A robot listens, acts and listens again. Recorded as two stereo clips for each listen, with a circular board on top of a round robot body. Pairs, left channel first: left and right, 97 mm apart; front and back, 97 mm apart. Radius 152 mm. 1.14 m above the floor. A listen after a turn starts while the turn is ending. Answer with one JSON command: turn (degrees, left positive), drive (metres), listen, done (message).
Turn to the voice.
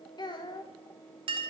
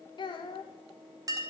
{"turn": 45}
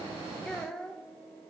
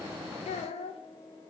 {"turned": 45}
{"done": "Found it: a child speaking, straight ahead, under 1 m away."}